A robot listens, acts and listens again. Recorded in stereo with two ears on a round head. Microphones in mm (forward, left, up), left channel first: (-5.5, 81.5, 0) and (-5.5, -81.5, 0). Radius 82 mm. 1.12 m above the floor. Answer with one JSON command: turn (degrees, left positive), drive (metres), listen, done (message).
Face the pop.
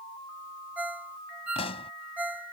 {"turn": 30}
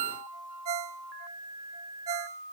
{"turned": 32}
{"listen": true}
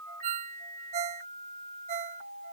{"done": "I heard a pop, but can't make it out now. It was about straight ahead or 115° left."}